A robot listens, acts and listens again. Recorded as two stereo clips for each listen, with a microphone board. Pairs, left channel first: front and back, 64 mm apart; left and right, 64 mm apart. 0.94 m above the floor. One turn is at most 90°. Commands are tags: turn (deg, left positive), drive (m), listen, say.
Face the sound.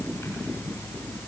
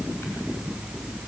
<listen/>
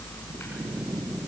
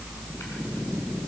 <listen/>
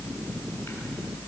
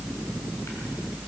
<say>I can't make out anything to turn to.</say>